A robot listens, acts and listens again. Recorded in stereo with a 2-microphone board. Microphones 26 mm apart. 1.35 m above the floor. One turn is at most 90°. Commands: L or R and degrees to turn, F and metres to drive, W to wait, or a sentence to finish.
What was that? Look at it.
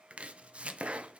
R50
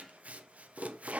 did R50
R70
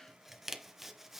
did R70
R10
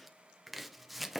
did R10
Facing the chopping, under 1 m away.